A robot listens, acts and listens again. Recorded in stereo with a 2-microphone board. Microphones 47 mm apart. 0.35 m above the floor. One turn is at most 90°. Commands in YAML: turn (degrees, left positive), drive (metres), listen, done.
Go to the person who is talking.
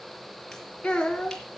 turn: 20
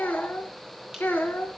turn: 90
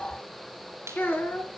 turn: 50
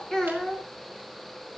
turn: 15
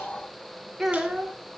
drive: 1.0
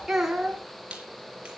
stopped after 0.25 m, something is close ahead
turn: -10
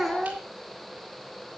done: "Something is in my way. I am facing the child speaking but have not reached it."